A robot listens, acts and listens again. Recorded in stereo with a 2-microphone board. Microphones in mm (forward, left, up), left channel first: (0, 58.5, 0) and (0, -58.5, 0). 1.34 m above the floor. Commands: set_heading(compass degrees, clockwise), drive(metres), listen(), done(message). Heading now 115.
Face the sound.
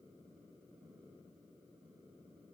listen()
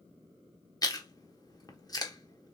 set_heading(85)
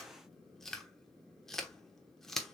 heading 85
done("Facing the chewing, 1 to 2 m away.")